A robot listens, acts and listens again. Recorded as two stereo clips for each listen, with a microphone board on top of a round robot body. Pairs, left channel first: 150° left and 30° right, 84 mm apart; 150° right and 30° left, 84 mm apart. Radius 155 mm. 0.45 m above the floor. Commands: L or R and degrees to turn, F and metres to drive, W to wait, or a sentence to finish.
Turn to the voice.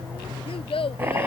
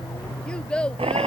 L130
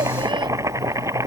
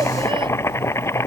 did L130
W
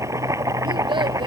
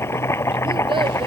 W
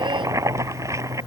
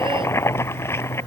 Facing where the child speaking came from. I can't hear it now.